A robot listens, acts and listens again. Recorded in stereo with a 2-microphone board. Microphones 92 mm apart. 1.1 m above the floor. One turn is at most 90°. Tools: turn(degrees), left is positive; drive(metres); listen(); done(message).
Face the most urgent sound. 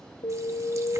turn(degrees=90)
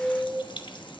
done("Facing the alarm.")